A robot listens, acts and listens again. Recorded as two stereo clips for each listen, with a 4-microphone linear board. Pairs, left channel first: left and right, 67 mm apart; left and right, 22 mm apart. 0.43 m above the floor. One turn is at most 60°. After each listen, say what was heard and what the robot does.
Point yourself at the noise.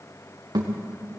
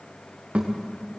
Turn 60° right.
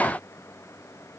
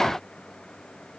Nothing new. It was at 30° right. Turn 30° right.
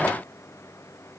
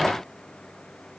Facing where the thud came from. I can't hear it now.